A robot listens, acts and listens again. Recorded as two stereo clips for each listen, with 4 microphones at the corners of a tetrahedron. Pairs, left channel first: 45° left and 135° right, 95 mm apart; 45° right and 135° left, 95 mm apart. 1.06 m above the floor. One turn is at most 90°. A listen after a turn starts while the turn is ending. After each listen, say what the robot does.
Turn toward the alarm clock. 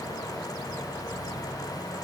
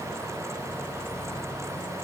Keep listening.
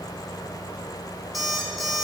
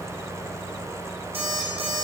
Turn 90° left.
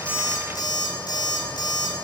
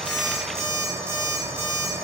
Turn 80° left.
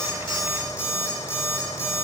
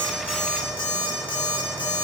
Turn 10° right.
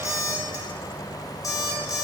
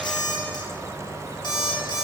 Found it: an alarm clock, straight ahead, 1 to 2 m away.